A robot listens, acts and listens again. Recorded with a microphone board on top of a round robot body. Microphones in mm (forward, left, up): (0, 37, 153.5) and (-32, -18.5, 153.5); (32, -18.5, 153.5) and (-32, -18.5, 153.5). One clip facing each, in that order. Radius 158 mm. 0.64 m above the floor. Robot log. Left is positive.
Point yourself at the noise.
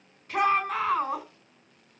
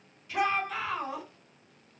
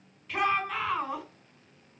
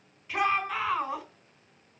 note: The shout: 100° left.
cmd yaw +100
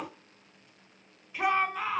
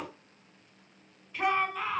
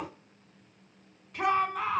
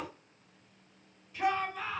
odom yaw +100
note: The shout is now 20° right.
cmd yaw -20
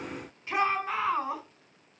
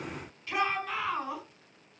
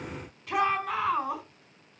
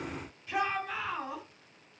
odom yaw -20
end: Found it: a shout, straight ahead, over 4 m away.